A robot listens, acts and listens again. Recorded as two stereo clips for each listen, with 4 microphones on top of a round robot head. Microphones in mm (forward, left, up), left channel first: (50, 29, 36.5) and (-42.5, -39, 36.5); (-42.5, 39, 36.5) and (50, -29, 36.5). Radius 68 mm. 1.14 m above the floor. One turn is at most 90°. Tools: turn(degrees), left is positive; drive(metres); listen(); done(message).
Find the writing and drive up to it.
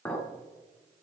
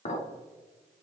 listen()
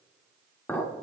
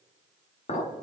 listen()
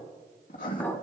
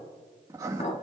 turn(degrees=25)
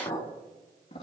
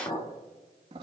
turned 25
drive(metres=1.0)
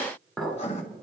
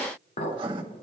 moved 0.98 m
turn(degrees=10)
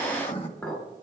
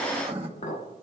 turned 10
drive(metres=1.0)
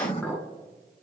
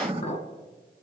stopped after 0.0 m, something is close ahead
done("Arrived at the writing, straight ahead.")